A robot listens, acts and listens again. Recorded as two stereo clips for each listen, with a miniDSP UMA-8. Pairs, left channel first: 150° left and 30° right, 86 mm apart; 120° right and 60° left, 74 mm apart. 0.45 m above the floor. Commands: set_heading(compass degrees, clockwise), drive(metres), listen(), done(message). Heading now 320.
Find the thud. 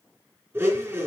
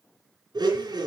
listen()
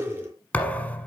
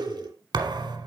set_heading(240)
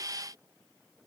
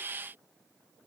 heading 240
done("I heard a thud from this way, but can't make it out now.")